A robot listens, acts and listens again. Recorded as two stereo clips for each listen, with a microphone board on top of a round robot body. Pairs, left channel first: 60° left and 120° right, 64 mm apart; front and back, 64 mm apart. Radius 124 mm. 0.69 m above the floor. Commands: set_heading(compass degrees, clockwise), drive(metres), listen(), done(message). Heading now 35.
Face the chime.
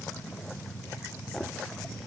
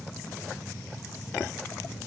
listen()
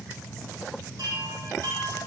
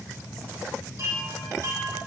set_heading(175)
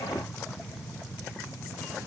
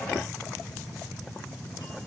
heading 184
set_heading(174)
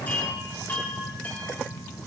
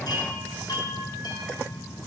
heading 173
done("Found it: a chime, straight ahead.")